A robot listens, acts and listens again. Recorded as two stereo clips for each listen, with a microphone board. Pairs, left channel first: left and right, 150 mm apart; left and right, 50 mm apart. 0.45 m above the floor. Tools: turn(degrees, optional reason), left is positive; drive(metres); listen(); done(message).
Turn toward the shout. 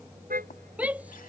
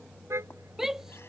turn(degrees=-30)
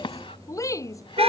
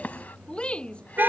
turn(degrees=20, reason="So it is at 20° left.")
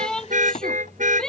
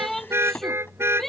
done("Found it: a shout, straight ahead.")